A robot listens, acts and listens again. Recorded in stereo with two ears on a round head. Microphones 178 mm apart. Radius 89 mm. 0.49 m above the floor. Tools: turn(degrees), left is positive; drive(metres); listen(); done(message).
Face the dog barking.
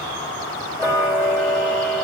listen()
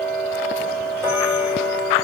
listen()
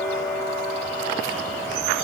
done("I can't make out a dog barking, only ticking.")